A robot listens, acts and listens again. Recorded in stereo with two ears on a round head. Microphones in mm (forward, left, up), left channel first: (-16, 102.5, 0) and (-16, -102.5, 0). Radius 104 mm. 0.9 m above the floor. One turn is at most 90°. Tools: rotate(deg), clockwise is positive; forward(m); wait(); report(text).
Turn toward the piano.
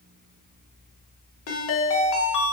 wait()
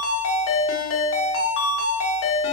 wait()
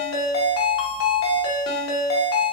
report("I can't make out a piano, only a ringtone.")